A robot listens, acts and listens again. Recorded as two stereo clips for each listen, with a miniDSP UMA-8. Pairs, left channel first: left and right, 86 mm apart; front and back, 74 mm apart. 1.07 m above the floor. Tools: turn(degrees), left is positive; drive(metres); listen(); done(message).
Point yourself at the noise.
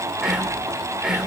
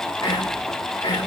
turn(degrees=-10)
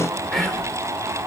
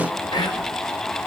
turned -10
done("Facing the whispering, 2 to 4 m away.")